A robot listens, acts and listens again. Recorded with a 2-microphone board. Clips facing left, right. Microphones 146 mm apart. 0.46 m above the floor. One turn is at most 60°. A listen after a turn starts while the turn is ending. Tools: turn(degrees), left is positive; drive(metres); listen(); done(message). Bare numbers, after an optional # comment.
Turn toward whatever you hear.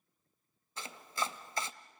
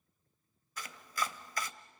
# The chopping: about 25° left or 155° left.
turn(25)
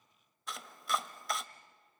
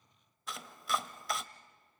done("Facing the chopping, under 1 m away.")